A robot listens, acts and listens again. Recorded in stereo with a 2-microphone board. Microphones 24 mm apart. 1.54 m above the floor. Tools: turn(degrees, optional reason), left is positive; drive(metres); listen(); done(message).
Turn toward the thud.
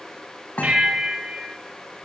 turn(degrees=90)
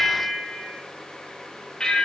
done("I heard a thud from this way, but can't make it out now.")